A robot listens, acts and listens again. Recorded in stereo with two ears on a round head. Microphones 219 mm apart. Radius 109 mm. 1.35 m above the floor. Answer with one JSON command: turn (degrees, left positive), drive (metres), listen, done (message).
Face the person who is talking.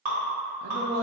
{"turn": -65}
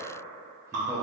{"listen": true}
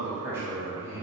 {"turn": -10}
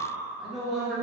{"done": "Facing the man speaking."}